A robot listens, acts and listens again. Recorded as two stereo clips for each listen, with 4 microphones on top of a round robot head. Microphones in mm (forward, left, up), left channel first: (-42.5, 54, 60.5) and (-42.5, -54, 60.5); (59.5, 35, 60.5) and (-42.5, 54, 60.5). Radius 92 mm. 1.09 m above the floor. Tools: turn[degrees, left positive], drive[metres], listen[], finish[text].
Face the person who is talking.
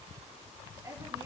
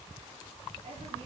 Thought: The woman speaking: 150° right.
Action: turn[-150]
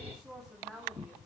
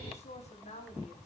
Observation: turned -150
Action: finish[Found it: a woman speaking, straight ahead.]